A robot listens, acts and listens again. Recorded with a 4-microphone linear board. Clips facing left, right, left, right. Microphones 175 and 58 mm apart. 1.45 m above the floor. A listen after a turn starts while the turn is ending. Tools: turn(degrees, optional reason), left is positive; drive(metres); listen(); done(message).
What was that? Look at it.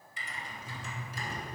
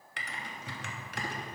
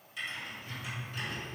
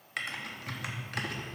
turn(degrees=-70, reason="The typing on a keyboard: about 70° right or 110° right.")
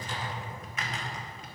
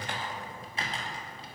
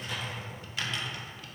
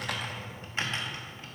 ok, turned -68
turn(degrees=-35, reason="So it is at 35° right.")
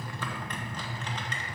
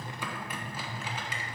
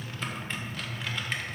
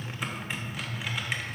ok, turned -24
turn(degrees=-10, reason="The typing on a keyboard is now 10° right.")
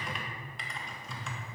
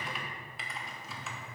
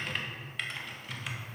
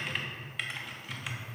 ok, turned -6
done("Facing the typing on a keyboard.")